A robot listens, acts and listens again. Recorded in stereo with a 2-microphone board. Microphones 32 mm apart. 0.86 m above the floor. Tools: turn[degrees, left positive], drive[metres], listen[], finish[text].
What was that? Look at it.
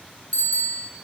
Thought: The bicycle bell: about 50° left or 130° left.
Action: turn[50]
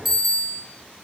Action: finish[Facing the bicycle bell.]